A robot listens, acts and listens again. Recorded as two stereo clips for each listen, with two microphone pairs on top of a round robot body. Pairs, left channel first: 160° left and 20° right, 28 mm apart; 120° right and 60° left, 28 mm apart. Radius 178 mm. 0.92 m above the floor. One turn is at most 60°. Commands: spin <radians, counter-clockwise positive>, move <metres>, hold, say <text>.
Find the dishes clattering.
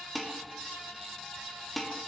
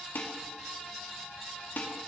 spin -1.05
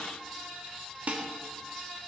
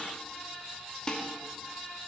spin -0.96
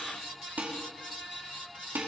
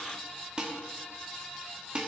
say Found it: dishes clattering, straight ahead.